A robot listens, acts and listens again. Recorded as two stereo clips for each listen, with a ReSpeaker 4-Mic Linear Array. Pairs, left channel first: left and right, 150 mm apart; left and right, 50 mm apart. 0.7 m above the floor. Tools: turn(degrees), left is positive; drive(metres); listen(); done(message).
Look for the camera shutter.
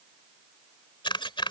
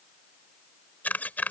turn(degrees=30)
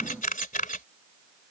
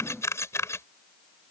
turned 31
turn(degrees=115)
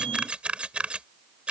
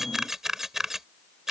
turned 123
done("Facing the camera shutter.")